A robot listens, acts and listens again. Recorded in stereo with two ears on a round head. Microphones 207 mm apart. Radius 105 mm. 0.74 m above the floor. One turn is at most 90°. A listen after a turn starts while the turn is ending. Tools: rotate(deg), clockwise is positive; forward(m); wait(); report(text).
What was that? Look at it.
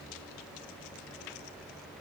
wait()
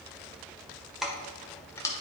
rotate(-30)
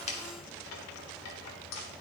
rotate(-90)
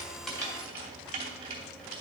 rotate(25)
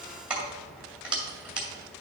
report("Found it: keys jangling, straight ahead.")